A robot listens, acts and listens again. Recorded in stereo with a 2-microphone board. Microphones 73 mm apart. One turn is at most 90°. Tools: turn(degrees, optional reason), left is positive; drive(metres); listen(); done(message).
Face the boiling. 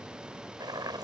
turn(degrees=-70, reason="The boiling: about 70° right or 110° right.")
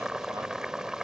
done("Found it: boiling, straight ahead.")